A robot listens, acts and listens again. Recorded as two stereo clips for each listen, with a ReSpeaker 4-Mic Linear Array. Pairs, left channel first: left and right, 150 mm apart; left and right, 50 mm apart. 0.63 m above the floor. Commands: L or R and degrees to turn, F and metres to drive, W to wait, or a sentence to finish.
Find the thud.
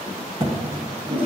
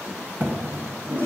R35
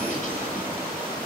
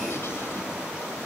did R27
W
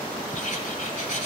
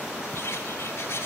I heard a thud, but can't make it out now. It was about 10° right or 115° right.